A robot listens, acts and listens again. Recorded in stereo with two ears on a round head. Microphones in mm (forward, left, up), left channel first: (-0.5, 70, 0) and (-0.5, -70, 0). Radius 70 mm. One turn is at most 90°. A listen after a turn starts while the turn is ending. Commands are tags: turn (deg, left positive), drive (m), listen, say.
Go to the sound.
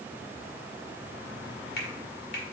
<turn deg="70"/>
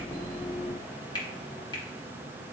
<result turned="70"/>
<turn deg="30"/>
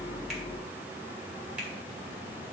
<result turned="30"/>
<listen/>
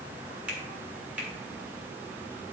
<turn deg="-10"/>
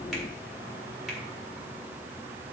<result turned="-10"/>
<drive m="1.0"/>
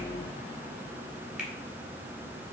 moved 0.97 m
<listen/>
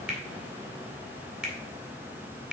<drive m="1.0"/>
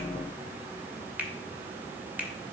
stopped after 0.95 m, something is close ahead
<turn deg="-10"/>
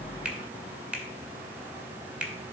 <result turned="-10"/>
<turn deg="-10"/>
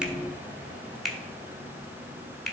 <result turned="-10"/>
<say>Arrived at the finger snap, straight ahead.</say>